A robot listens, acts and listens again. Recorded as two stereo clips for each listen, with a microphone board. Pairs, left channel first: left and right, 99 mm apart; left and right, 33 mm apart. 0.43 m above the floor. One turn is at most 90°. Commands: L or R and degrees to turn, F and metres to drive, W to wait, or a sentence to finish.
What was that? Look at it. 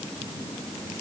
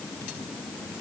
W
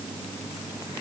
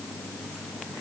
W
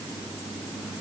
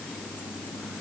I can't make out anything.